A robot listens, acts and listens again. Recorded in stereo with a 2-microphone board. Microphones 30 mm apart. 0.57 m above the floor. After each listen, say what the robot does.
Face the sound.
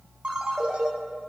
Turn 40° right.
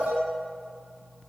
Turn 100° right.
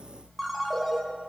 Facing the ringtone.